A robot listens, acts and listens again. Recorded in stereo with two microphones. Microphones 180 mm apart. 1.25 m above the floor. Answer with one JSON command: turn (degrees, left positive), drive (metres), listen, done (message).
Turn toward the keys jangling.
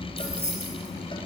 {"turn": 90}
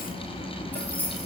{"turn": 10}
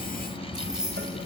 {"done": "Found it: keys jangling, straight ahead."}